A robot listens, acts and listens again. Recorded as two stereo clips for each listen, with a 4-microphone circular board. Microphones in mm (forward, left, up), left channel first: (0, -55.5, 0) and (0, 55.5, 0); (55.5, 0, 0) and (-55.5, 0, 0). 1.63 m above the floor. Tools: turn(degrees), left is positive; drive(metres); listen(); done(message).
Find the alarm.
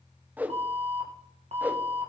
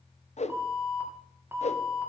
turn(degrees=110)
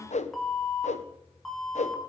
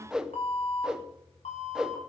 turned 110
done("Facing the alarm.")